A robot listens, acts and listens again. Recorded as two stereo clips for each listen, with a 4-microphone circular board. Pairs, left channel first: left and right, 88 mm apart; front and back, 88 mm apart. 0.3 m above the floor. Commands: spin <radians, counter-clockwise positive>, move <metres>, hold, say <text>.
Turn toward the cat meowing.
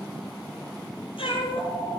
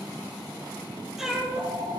spin 1.66
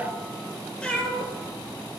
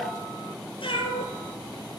spin 0.26
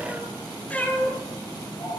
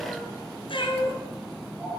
spin 0.35
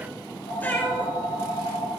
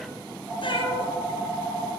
spin 0.35
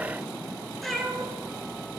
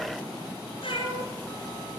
say Facing the cat meowing, 2 to 4 m away.